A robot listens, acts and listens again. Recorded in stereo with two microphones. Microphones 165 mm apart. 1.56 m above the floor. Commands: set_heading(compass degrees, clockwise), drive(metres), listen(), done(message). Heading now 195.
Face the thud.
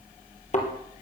set_heading(150)
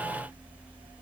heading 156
listen()
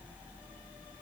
done("I heard a thud, but can't make it out now. It was about 5° left or 95° left.")